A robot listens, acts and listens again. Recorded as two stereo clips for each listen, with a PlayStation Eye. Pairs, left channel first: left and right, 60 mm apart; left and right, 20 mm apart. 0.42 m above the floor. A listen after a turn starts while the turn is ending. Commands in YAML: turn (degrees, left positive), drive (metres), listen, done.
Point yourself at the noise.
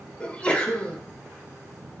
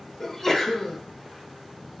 turn: 20
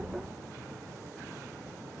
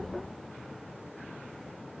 listen: true
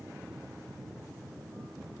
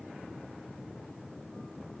done: "I heard a sneeze, but can't make it out now. It was about straight ahead or 140° left."